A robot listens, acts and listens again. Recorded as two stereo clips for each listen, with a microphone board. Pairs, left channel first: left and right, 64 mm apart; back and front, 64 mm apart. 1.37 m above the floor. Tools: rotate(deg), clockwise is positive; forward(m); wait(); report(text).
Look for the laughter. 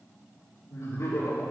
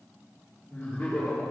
rotate(-100)
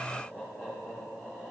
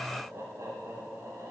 rotate(25)
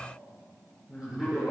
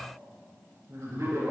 rotate(15)
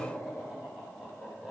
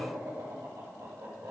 report("Found it: laughter, straight ahead, over 4 m away.")